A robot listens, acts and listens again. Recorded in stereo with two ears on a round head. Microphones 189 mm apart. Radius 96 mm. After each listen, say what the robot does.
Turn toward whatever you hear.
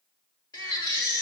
Turn 20° left.
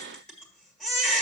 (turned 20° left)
Found it: a baby crying, straight ahead, 1 to 2 m away.